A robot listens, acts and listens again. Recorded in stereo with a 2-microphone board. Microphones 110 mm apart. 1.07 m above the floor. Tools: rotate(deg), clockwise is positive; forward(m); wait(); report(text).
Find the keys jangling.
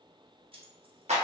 rotate(50)
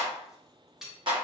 report("Facing the keys jangling, 1 to 2 m away.")